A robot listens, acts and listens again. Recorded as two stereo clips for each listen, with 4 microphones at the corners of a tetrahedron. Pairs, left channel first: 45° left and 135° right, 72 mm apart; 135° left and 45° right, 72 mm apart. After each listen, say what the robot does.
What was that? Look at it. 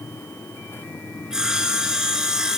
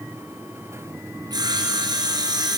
Turn 55° right.
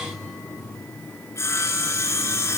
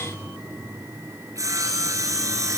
Found it: sawing, straight ahead.